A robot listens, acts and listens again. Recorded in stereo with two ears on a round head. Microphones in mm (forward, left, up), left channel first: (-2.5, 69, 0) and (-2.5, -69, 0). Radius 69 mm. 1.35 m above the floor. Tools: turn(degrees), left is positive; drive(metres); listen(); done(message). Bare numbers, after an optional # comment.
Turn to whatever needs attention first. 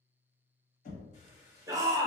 # The shout: about 25° right or 155° right.
turn(-25)
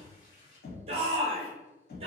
# So it is at 130° right.
turn(-130)
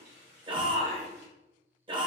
# The shout is now 40° right.
turn(-40)
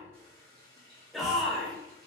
done("Found it: a shout, straight ahead.")